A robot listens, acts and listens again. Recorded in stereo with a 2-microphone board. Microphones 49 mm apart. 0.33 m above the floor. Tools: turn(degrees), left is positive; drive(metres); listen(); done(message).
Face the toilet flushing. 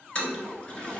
turn(degrees=20)
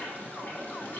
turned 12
turn(degrees=145)
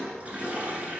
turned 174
turn(degrees=-30)
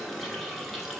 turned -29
done("Facing the toilet flushing.")